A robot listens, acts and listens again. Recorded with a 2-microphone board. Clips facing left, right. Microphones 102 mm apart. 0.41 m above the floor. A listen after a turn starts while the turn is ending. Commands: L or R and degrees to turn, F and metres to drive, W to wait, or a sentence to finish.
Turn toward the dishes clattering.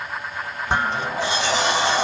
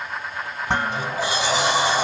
R90
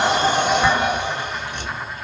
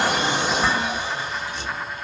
L10
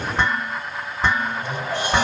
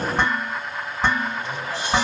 Found it: dishes clattering, straight ahead.